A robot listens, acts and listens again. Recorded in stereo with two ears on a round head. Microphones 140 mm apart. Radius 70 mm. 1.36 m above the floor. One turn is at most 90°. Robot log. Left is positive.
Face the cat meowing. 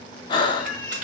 cmd yaw +30
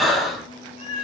note: So it is at 145° left.
cmd yaw +90
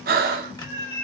note: The cat meowing is now 75° left.
cmd yaw +75
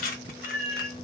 end: Facing the cat meowing.